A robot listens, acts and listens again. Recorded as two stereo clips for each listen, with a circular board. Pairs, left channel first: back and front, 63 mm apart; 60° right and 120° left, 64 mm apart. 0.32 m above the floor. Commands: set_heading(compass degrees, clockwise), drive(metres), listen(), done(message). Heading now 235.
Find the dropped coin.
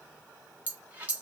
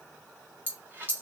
set_heading(170)
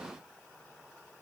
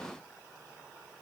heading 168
done("Facing where the dropped coin came from. I can't hear it now.")